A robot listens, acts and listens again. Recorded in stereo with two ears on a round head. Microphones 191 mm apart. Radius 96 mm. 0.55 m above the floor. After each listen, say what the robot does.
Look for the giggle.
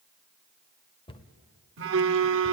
Keep listening.
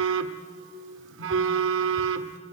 Keep listening.
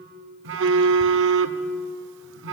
I can't make out a giggle to turn to.